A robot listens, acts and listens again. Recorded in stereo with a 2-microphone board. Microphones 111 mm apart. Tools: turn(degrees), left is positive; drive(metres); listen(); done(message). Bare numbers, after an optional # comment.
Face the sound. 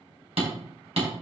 # The hammering: about 65° right or 115° right.
turn(-65)
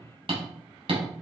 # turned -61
# So it is at 55° right.
turn(-55)
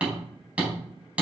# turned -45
# The hammering is now 10° right.
turn(-10)
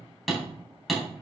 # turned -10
done("Facing the hammering, 2 to 4 m away.")